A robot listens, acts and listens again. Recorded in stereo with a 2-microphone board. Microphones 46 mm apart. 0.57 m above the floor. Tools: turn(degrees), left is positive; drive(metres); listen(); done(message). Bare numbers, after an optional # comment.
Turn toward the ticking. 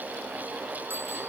listen()
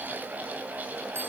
listen()
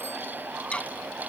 # The ticking: about 25° left or 155° left.
turn(25)
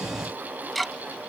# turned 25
done("Found it: ticking, straight ahead.")